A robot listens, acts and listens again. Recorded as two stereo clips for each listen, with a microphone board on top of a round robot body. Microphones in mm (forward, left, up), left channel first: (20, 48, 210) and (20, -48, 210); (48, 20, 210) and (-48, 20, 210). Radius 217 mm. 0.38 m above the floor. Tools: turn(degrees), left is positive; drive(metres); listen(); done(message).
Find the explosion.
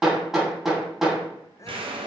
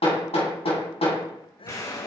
turn(degrees=-60)
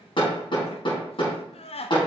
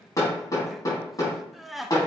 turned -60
done("Facing where the explosion came from. I can't hear it now.")